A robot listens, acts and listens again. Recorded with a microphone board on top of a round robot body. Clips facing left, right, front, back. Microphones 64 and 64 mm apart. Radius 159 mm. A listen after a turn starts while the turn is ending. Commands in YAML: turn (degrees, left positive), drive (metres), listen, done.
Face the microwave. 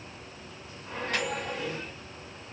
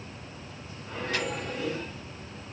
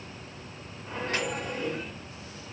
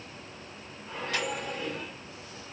turn: 55
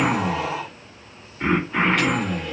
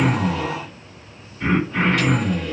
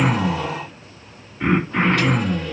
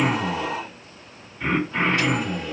listen: true
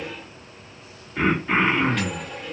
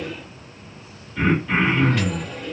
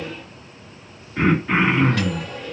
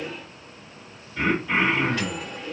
done: "Facing the microwave."